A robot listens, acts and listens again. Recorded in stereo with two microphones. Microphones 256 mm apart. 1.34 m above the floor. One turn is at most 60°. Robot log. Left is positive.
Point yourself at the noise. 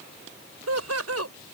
note: The laughter: about 70° right or 110° right.
cmd yaw -60
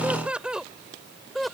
end: Facing the laughter.